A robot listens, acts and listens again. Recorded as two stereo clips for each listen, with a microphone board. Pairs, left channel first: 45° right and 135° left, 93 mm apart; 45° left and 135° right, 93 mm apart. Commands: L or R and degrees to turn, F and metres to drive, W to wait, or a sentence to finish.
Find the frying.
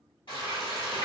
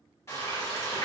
R15
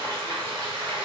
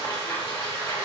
Found it: frying, straight ahead, 1 to 2 m away.